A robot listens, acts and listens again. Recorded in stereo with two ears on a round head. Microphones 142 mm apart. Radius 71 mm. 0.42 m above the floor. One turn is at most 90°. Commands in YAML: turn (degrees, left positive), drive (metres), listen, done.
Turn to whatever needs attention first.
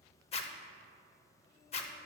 listen: true
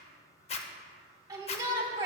turn: -25
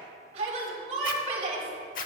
turn: -90
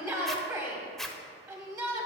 turn: -25
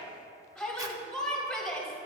done: "Found it: a shout, straight ahead."